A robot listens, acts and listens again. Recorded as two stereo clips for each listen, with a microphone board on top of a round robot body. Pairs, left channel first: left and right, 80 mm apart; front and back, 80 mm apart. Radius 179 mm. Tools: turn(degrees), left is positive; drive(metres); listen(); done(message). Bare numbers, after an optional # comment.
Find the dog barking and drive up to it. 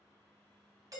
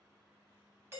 listen()
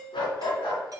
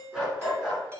# The dog barking: 95° left.
turn(95)
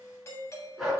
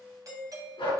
drive(1.0)
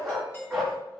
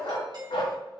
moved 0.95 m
drive(1.0)
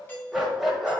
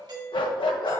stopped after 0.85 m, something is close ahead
done("Arrived at the dog barking, straight ahead.")